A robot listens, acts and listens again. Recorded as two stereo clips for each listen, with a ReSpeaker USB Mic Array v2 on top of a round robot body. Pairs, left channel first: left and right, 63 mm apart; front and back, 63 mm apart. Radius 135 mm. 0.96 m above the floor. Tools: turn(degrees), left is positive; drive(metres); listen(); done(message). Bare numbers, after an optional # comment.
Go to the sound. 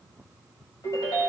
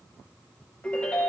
# The ringtone: 65° left.
turn(65)
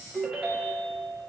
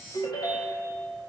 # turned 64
drive(1.0)
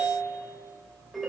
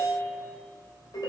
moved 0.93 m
drive(1.0)
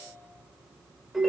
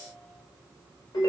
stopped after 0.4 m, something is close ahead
done("Blocked. The ringtone is further on, straight ahead.")